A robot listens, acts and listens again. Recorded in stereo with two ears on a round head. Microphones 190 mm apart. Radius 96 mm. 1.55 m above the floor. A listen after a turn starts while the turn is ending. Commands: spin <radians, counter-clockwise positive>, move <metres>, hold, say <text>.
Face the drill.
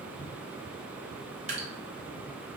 hold
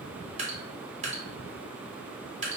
hold
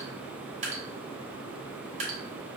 say I can't make out a drill, only dripping.